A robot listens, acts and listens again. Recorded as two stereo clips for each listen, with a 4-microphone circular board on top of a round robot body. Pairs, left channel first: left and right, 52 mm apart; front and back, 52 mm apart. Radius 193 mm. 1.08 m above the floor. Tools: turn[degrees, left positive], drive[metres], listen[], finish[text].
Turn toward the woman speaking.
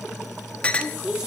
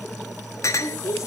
Thought: The woman speaking: 15° right.
Action: turn[-15]
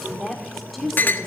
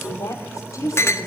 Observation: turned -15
Action: finish[Found it: a woman speaking, straight ahead.]